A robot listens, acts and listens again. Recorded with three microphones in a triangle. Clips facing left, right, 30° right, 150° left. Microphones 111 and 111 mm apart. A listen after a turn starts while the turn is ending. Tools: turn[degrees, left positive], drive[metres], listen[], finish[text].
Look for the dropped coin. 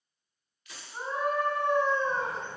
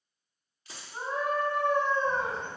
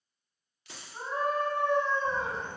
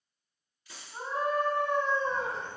Thought: The dropped coin: 30° right.
Action: turn[-30]
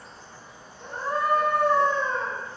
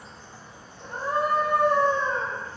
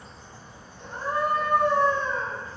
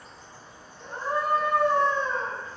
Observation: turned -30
Action: finish[Facing where the dropped coin came from. I can't hear it now.]